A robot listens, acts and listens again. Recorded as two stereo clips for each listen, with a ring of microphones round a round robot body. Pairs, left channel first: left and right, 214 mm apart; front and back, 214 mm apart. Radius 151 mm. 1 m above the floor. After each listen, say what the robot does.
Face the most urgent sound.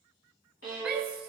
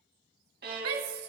Turn 175° right.
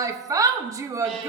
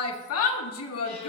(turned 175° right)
Turn 15° right.
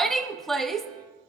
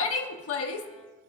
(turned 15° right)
Facing the shout, 1 to 2 m away.